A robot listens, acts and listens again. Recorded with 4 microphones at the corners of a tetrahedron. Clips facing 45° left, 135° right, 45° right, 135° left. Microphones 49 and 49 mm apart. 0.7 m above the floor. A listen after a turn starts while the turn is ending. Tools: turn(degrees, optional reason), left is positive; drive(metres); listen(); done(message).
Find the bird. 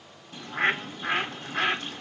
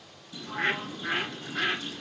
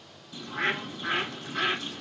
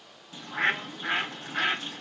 turn(degrees=85, reason="The bird: 85° left.")
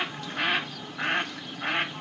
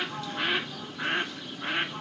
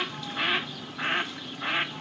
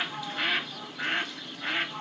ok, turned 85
turn(degrees=25, reason="The bird is now 25° left.")
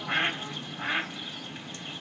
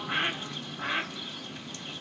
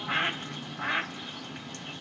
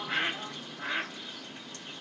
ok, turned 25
turn(degrees=-15, reason="The bird is now 15° right.")
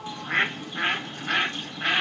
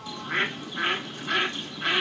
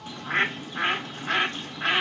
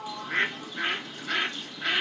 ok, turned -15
done("Found it: a bird, straight ahead, 1 to 2 m away.")